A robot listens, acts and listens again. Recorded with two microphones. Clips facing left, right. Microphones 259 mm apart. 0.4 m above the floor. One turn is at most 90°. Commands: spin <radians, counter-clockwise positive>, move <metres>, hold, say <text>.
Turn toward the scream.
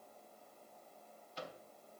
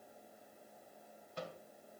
hold
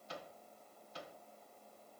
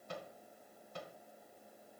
hold
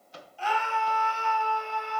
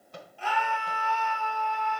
spin -1.05
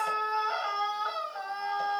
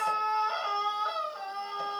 spin -0.70
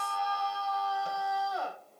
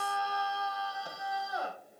spin -0.17
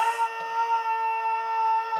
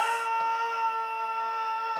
say Facing the scream, 2 to 4 m away.